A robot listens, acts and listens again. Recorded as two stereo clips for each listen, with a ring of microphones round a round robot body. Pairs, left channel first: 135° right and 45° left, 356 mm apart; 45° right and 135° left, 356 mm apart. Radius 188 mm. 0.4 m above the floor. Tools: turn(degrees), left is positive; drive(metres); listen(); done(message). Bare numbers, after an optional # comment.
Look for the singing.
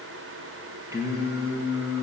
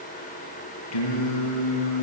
# The singing: 35° right.
turn(-35)
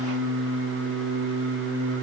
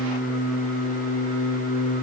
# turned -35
# The singing is now 10° left.
turn(10)
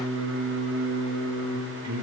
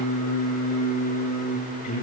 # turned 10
done("Facing the singing, over 4 m away.")